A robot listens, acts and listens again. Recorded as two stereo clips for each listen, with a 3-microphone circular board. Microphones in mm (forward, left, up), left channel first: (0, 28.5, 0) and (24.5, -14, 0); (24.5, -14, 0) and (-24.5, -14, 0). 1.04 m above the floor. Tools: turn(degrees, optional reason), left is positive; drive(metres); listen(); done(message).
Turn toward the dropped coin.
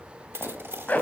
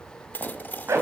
turn(degrees=-40, reason="The dropped coin: 40° right.")
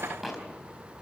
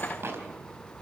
done("I heard a dropped coin from this way, but can't make it out now.")